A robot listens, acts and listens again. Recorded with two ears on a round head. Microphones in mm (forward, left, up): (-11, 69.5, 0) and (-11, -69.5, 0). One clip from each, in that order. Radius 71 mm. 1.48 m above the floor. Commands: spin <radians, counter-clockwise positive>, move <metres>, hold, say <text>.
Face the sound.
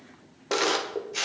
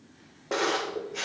spin 1.57
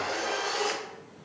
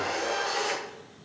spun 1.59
spin 0.17
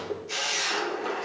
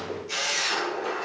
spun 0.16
say Found it: a camera shutter, straight ahead.